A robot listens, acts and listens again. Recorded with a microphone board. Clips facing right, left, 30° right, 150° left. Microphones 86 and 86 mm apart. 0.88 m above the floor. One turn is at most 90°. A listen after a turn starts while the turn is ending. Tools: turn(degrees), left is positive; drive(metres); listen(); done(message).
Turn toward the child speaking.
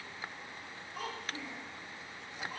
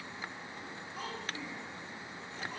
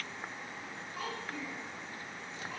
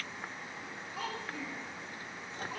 turn(degrees=-90)
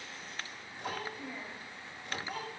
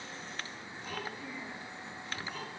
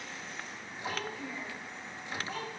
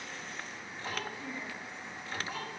turn(degrees=-85)
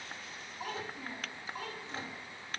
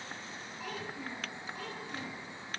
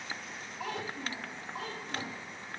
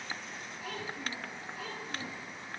turn(degrees=-25)
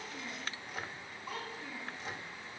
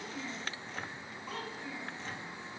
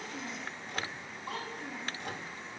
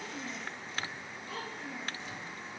done("Found it: a child speaking, straight ahead.")